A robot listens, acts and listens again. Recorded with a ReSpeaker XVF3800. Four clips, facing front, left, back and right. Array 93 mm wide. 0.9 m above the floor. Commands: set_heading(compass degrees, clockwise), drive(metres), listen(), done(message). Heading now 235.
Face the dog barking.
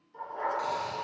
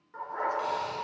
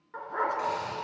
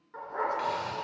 set_heading(65)
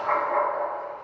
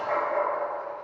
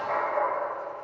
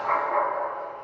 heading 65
set_heading(115)
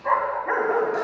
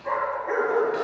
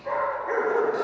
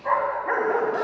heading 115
set_heading(170)
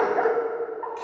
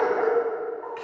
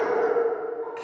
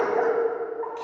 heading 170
set_heading(205)
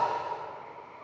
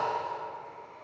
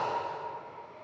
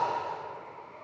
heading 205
set_heading(230)
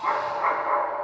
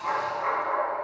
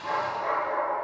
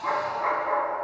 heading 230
set_heading(250)
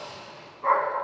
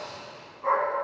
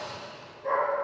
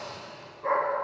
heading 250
done("Facing the dog barking.")